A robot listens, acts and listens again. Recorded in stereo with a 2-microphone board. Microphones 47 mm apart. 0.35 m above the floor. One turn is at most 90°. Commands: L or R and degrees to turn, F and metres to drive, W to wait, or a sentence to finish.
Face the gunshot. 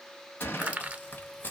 L50
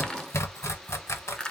W
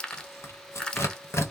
I heard a gunshot, but can't make it out now. It was about straight ahead or 80° left.